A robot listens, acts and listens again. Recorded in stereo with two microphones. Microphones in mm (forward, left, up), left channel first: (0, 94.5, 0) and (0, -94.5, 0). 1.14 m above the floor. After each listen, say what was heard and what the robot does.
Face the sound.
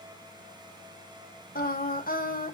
The singing: about 50° left or 130° left. Turn 50° left.
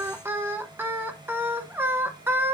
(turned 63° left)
So it is at 10° right. Turn 10° right.
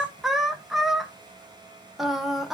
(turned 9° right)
Facing the singing, under 1 m away.